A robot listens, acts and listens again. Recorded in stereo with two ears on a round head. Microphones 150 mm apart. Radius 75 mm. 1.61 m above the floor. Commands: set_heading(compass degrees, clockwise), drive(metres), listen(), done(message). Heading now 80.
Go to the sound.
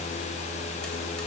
listen()
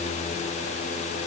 listen()
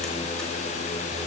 done("I can't make out anything to turn to.")